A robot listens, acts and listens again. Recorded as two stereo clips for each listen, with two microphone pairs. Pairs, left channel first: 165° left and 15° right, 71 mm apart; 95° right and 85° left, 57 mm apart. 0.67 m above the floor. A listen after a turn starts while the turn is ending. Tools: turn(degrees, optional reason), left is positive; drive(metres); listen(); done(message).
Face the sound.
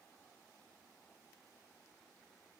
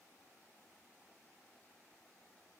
listen()
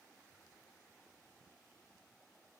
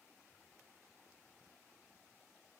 listen()
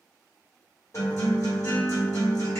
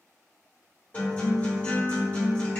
turn(degrees=-155, reason="The guitar: 155° right.")
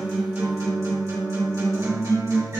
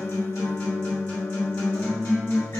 turn(degrees=-55, reason="The guitar is now 55° right.")
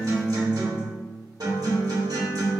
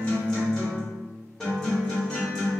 turn(degrees=-15, reason="The guitar is now 15° right.")
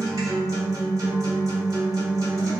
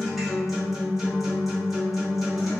done("Facing the guitar.")